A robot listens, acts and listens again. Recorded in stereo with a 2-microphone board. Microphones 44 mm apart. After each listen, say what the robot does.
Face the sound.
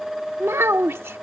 Turn 65° right.
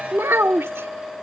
Turn 60° right.
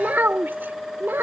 Turn 55° right.
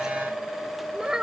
Turn 20° right.
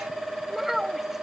Found it: a child speaking, straight ahead.